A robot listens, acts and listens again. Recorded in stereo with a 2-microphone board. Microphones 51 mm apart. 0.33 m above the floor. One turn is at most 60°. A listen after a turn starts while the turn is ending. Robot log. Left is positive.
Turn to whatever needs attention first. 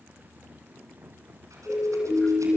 note: The siren: about 40° left or 140° left.
cmd yaw +40
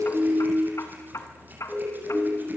note: So it is at 10° left.
cmd yaw +10
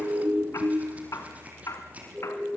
end: Facing the siren.